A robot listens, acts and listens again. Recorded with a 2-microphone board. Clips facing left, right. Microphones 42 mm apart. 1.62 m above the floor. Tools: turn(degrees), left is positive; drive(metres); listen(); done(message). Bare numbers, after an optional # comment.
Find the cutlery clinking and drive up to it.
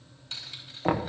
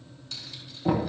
listen()
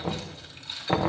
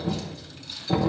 listen()
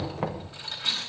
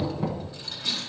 # The cutlery clinking: about 40° left or 140° left.
turn(40)
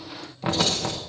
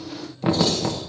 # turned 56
listen()
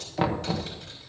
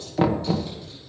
listen()
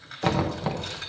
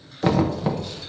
done("I heard cutlery clinking, but can't make it out now. It was about 15° right or 80° left. I did not reach it.")